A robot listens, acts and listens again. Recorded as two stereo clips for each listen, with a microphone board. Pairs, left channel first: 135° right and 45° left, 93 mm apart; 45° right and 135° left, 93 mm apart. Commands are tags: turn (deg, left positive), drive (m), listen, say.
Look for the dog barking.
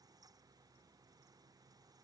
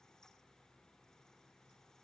<listen/>
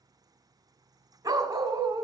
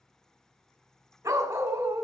<turn deg="80"/>
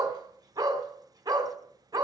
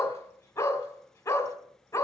<say>Facing the dog barking.</say>